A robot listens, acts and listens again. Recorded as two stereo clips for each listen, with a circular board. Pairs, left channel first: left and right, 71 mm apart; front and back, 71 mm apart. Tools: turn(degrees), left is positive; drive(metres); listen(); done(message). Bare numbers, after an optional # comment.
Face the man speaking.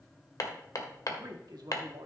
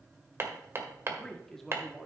# The man speaking: 95° right.
turn(-95)
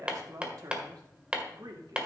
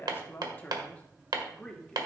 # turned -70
# The man speaking is now 80° right.
turn(-80)
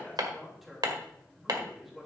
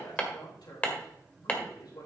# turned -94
done("Found it: a man speaking, straight ahead.")